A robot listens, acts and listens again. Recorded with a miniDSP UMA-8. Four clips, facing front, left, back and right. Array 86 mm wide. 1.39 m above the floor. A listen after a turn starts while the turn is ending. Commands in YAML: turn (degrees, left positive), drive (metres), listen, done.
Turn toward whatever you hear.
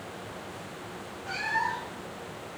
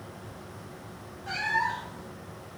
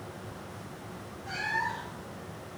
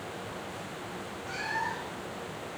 turn: 90
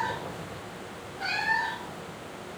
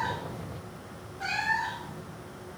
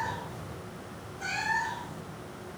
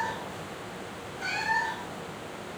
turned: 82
turn: 25
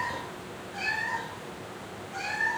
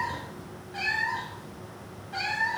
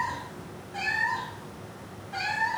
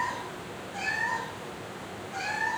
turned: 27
turn: 115
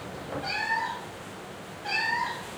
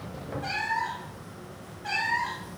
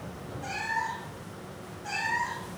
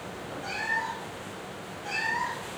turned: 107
done: "Facing the cat meowing, 1 to 2 m away."